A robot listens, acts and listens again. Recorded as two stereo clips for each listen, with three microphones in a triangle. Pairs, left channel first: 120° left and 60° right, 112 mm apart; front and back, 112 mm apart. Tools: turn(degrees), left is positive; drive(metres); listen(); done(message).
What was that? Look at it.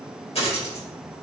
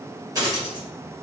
turn(degrees=130)
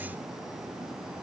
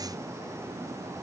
done("I heard a dropped coin from this way, but can't make it out now.")